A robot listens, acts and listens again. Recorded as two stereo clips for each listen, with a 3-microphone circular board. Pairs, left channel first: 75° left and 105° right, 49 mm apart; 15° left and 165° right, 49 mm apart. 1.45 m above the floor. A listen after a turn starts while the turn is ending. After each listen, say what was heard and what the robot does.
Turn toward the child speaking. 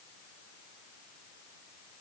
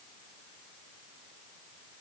Keep listening.
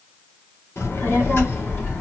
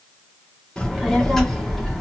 The child speaking: 105° left. Turn 105° left.
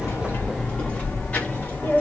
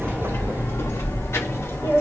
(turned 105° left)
The child speaking is now 20° left. Turn 20° left.
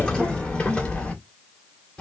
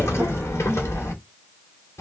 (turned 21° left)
Found it: a child speaking, straight ahead, 2 to 4 m away.